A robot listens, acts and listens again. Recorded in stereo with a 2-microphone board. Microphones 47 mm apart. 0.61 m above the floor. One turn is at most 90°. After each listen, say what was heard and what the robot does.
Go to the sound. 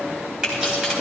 The keys jangling: about 15° right or 165° right. Turn 15° right.
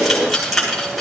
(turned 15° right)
Drive 1.0 m forward.
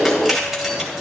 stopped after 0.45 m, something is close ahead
Blocked. The keys jangling is further on, straight ahead.